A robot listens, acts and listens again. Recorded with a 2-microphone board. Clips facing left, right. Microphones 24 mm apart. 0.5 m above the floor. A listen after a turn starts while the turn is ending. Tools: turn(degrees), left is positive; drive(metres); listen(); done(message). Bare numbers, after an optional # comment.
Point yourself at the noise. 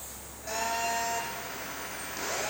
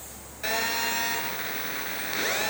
turn(-90)
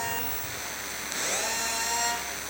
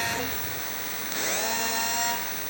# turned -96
done("Found it: a phone buzzing, straight ahead.")